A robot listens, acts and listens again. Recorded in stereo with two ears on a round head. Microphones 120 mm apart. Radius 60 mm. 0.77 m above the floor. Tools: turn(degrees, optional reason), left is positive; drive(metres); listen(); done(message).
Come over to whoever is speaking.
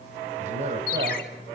turn(degrees=-60, reason="The man speaking: about 60° right or 120° right.")
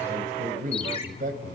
turn(degrees=-60, reason="So it is at 60° right.")
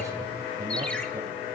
listen()
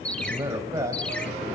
turn(degrees=-20, reason="The man speaking is now 20° right.")
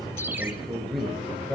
drive(metres=1.0)
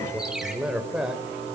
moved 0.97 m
drive(metres=1.0)
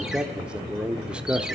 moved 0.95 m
drive(metres=1.0)
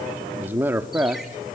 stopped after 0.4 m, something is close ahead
turn(degrees=-15, reason="The man speaking is now 15° right.")
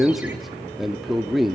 done("Arrived at the man speaking, straight ahead.")